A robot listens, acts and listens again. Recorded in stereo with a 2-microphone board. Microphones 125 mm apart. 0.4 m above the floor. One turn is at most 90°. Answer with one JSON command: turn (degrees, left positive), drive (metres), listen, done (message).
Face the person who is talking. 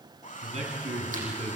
{"turn": -65}
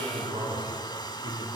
{"turn": -35}
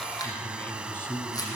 {"turn": 15}
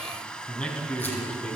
{"turn": 10}
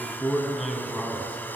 {"done": "Found it: a man speaking, straight ahead, over 4 m away."}